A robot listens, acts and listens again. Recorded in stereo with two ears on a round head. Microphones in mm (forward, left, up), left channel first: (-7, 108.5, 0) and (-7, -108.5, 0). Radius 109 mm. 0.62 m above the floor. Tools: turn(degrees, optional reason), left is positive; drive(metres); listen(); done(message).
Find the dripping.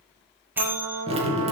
turn(degrees=-25, reason="The dripping: about 25° right or 155° right.")
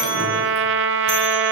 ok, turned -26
listen()
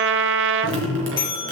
turn(degrees=-130, reason="So it is at 130° right.")
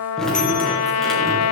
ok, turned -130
done("Facing the dripping, 2 to 4 m away.")